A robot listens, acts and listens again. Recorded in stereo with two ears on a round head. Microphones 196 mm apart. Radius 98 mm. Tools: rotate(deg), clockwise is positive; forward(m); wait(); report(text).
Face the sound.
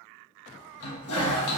rotate(-75)
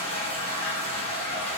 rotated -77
rotate(-30)
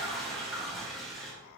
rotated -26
report("Facing the toilet flushing, 1 to 2 m away.")